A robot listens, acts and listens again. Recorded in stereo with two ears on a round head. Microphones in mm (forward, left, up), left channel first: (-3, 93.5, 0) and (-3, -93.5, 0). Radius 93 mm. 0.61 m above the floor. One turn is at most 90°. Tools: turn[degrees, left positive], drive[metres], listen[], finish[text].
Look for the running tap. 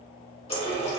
Thought: The running tap: about 30° left or 150° left.
Action: turn[30]
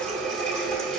Action: finish[Facing the running tap, 1 to 2 m away.]